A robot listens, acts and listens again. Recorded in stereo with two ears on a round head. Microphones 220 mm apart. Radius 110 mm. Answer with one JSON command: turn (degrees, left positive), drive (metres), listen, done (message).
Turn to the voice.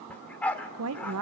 {"turn": -65}
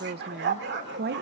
{"turn": -45}
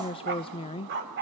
{"turn": 20}
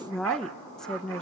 {"done": "Facing the woman speaking, under 1 m away."}